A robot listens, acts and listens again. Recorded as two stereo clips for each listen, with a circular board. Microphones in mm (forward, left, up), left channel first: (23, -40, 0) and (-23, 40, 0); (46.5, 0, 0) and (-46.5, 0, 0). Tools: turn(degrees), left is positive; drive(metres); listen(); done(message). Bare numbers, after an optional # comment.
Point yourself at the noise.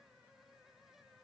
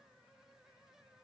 listen()
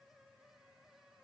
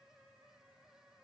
listen()
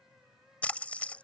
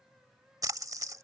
# The splash: 135° right.
turn(-135)
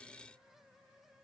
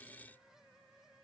done("I heard a splash from this way, but can't make it out now.")